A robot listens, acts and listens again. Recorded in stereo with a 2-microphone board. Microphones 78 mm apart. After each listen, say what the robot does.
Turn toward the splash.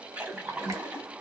Turn 20° right.
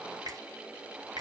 Keep listening.
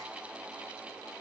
I heard a splash, but can't make it out now. It was about straight ahead or 140° right.